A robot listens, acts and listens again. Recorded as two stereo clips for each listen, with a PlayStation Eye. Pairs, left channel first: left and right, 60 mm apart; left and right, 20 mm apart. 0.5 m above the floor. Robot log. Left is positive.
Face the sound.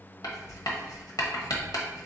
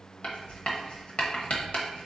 note: The writing: about 70° left or 110° left.
cmd yaw +70
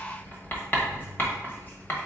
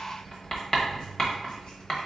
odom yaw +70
note: So it is at 35° left.
cmd yaw +35
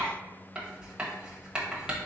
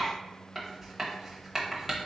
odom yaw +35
note: The writing is now 15° right.
cmd yaw -15
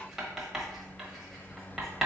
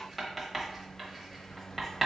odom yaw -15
end: Found it: writing, straight ahead, 1 to 2 m away.